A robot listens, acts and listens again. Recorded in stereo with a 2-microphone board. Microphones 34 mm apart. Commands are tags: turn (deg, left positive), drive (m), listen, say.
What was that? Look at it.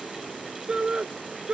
<turn deg="-30"/>
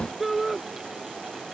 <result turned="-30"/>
<say>Found it: a shout, straight ahead.</say>